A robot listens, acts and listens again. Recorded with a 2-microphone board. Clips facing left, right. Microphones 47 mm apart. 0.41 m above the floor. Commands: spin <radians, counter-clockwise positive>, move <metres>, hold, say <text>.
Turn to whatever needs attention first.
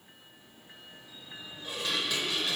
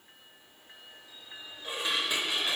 hold
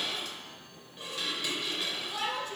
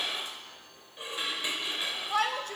spin -1.05
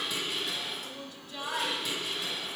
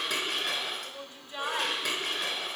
spin -0.70
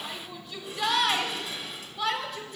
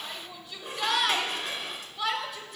say Found it: a shout, straight ahead.